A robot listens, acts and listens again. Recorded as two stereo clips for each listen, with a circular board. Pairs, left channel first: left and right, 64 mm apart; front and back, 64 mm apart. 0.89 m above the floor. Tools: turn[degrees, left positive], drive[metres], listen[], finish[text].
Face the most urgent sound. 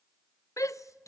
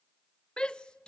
Thought: The shout: 75° left.
Action: turn[75]
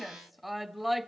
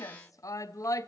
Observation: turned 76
Action: finish[Facing the shout.]